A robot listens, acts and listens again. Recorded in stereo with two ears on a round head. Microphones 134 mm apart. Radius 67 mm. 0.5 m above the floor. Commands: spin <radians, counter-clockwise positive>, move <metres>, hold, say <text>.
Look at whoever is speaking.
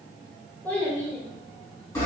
spin 0.52
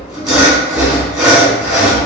hold
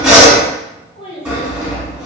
spin 2.36
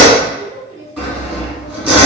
spin -0.52
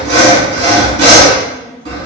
hold
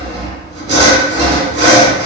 hold
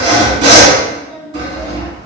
spin 0.26
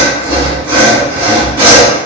hold
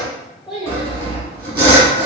say Found it: a child speaking, straight ahead.